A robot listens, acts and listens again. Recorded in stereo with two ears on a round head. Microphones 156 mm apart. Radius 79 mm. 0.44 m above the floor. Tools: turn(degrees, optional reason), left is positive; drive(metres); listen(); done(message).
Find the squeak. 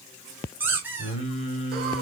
turn(degrees=-30)
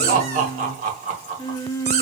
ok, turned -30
turn(degrees=-140, reason="So it is at 140° right.")
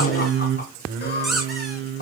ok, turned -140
done("Found it: a squeak, straight ahead.")